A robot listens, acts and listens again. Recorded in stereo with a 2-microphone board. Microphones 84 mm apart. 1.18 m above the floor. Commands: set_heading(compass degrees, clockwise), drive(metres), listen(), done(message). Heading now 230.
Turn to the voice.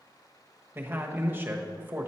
set_heading(255)
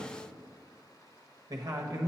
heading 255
set_heading(30)
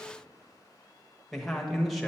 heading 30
done("Found it: a man speaking, straight ahead, 1 to 2 m away.")